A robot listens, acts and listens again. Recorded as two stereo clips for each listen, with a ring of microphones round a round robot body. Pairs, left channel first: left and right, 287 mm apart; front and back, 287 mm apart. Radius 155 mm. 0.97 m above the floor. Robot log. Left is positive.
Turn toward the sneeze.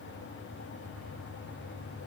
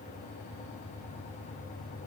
cmd idle
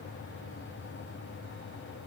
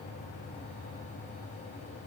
cmd idle
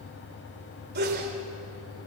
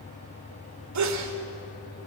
note: The sneeze: 150° right.
cmd yaw -150
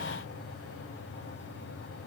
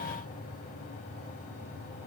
end: I heard a sneeze from this way, but can't make it out now.